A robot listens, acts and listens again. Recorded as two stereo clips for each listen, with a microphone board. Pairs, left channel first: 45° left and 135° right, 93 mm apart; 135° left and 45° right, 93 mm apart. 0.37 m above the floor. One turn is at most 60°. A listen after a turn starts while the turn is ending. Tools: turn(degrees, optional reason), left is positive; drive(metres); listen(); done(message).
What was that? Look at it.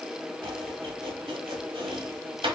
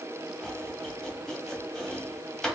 turn(degrees=-60, reason="The chopping: 140° right.")
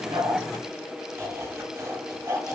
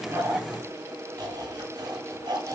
turn(degrees=-60, reason="The chopping is now 80° right.")
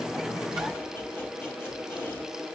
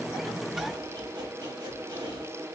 turn(degrees=-20, reason="Nothing new. It was at 20° right.")
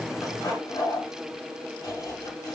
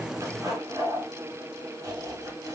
done("Found it: chopping, straight ahead.")